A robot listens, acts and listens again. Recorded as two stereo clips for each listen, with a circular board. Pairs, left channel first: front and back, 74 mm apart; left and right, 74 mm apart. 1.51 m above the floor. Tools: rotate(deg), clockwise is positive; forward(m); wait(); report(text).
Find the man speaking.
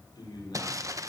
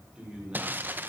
rotate(15)
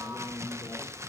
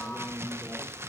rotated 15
report("Facing the man speaking, over 4 m away.")